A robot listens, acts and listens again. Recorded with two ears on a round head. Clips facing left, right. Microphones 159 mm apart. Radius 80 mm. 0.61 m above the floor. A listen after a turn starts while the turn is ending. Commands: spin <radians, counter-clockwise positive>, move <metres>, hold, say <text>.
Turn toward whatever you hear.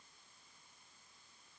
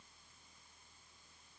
hold
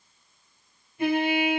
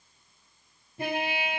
spin -0.52
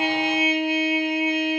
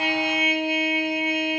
spin -2.09
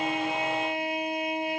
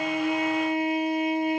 spin 0.44
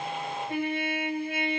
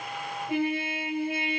spin -0.17
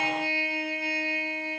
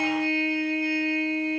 say Facing the trumpet, 1 to 2 m away.